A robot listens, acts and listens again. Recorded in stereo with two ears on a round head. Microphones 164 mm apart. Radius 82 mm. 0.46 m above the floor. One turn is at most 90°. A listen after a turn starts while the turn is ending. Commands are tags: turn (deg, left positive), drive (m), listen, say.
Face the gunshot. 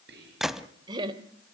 <turn deg="30"/>
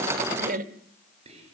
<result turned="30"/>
<listen/>
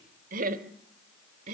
<say>I heard a gunshot, but can't make it out now. It was about 30° right or 150° left.</say>